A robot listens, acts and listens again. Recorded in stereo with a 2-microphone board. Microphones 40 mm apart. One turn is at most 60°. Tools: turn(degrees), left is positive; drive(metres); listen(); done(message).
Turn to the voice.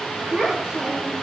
turn(degrees=-30)
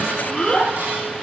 turn(degrees=20)
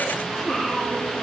done("Found it: a child speaking, straight ahead.")